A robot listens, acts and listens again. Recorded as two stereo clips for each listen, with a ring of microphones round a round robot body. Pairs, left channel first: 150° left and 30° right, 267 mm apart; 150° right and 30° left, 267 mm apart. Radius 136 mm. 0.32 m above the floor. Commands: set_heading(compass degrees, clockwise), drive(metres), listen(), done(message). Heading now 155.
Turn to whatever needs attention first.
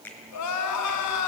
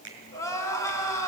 set_heading(25)
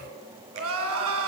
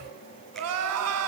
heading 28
done("Found it: crying, straight ahead, 2 to 4 m away.")